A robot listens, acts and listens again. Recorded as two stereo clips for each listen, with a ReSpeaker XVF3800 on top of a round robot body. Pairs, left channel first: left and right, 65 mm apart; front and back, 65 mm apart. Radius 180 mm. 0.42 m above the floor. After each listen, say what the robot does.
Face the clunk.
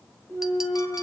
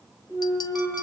Turn 40° left.
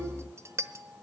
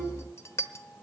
I heard a clunk from this way, but can't make it out now.